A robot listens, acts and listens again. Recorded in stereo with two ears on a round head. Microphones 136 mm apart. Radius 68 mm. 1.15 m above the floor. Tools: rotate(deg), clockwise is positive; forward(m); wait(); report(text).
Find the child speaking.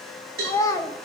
rotate(-20)
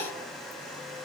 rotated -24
wait()
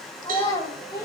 rotate(-25)
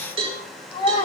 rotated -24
rotate(-140)
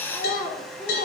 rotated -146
report("Found it: a child speaking, straight ahead, 2 to 4 m away.")